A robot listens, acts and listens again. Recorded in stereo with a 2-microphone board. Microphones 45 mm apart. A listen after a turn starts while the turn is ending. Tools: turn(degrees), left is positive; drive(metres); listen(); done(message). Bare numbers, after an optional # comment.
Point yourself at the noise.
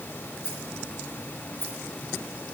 # The rattle: about 70° left or 110° left.
turn(70)
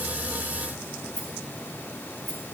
# So it is at 35° left.
turn(35)
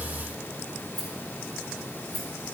done("Found it: a rattle, straight ahead.")